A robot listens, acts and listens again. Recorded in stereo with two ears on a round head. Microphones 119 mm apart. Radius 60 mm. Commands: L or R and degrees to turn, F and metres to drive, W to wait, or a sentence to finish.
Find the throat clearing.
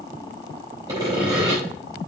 W
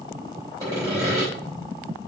W
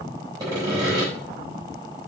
I can't make out throat clearing, only sawing.